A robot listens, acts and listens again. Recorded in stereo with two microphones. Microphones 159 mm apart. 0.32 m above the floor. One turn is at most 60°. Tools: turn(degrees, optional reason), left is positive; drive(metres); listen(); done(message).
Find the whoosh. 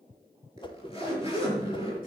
turn(degrees=30, reason="The whoosh: about 30° left or 150° left.")
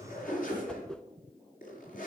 done("Facing the whoosh.")